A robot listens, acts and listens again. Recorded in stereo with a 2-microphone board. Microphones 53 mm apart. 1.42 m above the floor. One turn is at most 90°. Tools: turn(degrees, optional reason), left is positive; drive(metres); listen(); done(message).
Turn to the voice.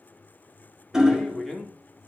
turn(degrees=30)
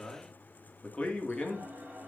turn(degrees=90, reason="So it is at 165° left.")
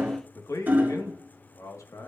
turn(degrees=85, reason="The man speaking is now 85° left.")
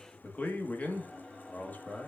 turn(degrees=30, reason="The man speaking is now 30° left.")
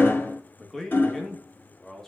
done("Found it: a man speaking, straight ahead, 1 to 2 m away.")